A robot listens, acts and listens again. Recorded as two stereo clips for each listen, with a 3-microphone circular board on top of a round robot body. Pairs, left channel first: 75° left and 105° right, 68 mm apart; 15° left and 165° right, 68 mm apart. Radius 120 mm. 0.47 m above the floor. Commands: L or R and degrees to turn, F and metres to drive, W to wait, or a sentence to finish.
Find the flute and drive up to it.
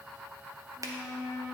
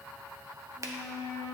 L55
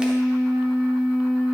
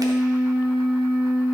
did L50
F1.0
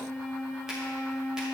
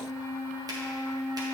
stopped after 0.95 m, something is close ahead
I am next to the flute.